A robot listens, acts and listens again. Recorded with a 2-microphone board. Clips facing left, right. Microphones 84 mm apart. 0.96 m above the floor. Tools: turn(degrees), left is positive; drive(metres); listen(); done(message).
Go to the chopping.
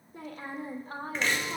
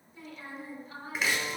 turn(degrees=-30)
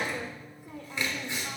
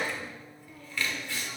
turn(degrees=20)
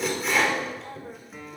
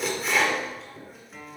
drive(metres=1.0)
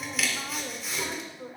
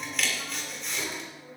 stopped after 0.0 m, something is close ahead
done("Something is in my way. I am facing the chopping but have not reached it.")